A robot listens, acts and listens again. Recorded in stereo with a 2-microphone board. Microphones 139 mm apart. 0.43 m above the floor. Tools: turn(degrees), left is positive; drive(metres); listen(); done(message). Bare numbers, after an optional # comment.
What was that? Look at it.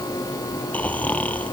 turn(30)
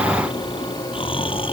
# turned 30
# So it is at 140° left.
turn(140)
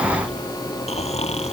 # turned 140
# The snoring is now 50° left.
turn(50)
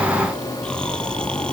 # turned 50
done("Facing the snoring.")